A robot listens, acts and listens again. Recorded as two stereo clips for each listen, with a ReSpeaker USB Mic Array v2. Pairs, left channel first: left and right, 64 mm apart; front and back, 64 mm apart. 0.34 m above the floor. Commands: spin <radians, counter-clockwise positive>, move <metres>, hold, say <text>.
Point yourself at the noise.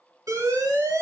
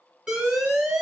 spin -1.83
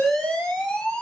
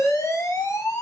spin 0.26
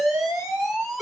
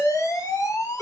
say Found it: an alarm, straight ahead.